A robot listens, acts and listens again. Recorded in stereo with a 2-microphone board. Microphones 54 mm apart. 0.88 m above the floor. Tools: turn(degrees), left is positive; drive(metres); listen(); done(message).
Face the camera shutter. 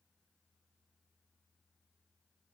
listen()
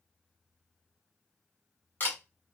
turn(degrees=35)
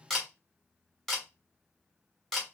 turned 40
done("Facing the camera shutter.")